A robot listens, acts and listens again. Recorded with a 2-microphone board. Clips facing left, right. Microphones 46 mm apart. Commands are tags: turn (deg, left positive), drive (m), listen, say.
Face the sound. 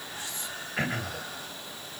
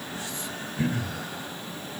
<turn deg="65"/>
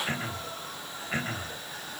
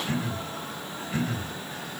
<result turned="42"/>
<turn deg="45"/>
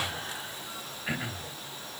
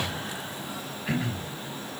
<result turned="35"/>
<say>Found it: throat clearing, straight ahead.</say>